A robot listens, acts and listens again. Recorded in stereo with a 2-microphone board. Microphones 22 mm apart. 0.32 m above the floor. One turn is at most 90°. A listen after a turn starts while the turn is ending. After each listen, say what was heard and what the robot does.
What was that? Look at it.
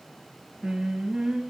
The singing: about 35° right or 145° right. Turn 35° right.
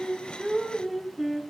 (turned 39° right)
Facing the singing, 2 to 4 m away.